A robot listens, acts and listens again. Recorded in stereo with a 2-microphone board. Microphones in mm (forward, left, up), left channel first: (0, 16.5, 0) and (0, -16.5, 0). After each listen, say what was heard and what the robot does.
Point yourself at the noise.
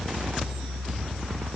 Keep listening.
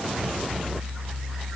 Keep listening.
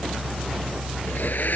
The blender: about 65° left or 115° left. Turn 65° left.
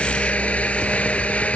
So it is at 45° left. Turn 45° left.
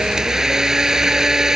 The blender is now 15° right. Turn 15° right.
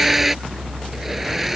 Found it: a blender, straight ahead.